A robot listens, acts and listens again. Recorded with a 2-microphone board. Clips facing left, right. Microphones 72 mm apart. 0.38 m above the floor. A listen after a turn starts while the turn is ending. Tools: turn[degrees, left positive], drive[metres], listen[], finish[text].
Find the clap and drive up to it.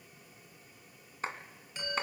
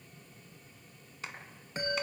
Thought: The clap: about 40° left or 140° left.
Action: turn[40]
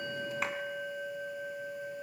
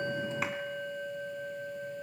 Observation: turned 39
Action: listen[]
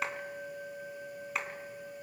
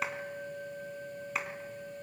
Action: drive[1.0]
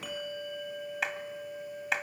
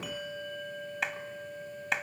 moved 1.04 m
Action: drive[1.0]
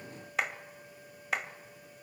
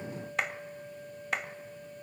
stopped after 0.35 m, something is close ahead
Action: finish[Arrived at the clap, straight ahead.]